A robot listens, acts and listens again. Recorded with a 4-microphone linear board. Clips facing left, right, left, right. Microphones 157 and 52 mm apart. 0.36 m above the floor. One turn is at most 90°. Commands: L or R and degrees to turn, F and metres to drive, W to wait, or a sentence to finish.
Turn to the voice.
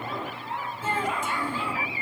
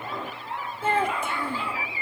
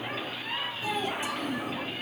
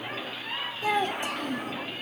R60
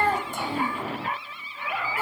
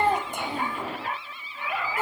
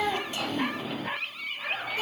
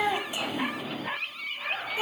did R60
R20
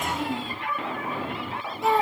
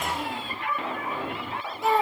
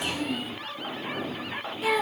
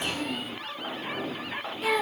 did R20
Facing the child speaking.